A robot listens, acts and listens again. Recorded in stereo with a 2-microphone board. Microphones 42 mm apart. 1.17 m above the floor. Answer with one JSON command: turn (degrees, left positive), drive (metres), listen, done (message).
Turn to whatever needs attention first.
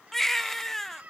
{"turn": 30}
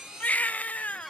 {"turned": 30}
{"turn": 145}
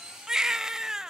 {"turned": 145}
{"turn": -10}
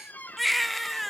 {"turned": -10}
{"done": "Facing the baby crying, under 1 m away."}